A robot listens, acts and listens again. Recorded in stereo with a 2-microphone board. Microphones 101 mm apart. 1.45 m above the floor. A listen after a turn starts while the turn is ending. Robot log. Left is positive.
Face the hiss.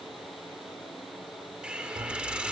cmd yaw -30
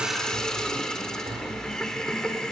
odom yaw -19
end: Found it: a hiss, straight ahead.